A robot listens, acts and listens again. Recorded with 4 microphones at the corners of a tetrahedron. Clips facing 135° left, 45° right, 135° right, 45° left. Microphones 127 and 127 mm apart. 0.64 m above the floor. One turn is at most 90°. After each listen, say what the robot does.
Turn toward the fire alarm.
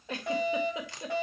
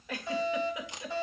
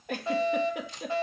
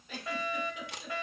Turn 90° left.
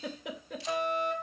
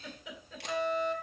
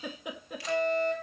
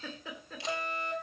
Turn 90° left.
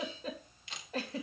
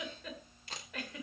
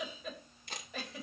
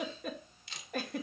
Turn 25° left.
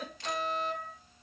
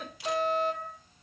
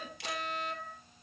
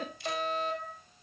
Turn 10° left.
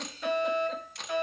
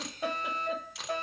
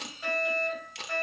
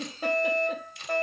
Facing the fire alarm, over 4 m away.